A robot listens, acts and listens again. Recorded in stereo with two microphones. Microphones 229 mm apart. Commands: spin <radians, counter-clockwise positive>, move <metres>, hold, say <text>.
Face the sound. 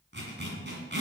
spin -0.96
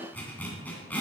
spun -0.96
say Facing the zipper.